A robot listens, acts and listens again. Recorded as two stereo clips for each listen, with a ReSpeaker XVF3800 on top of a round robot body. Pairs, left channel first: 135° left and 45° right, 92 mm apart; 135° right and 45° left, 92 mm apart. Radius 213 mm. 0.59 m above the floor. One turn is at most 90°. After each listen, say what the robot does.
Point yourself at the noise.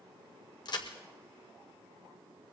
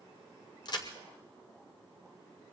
Turn 90° left.
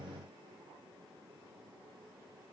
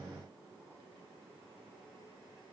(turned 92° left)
Turn 90° left.
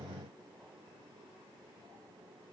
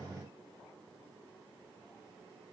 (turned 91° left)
Facing where the crack came from. I can't hear it now.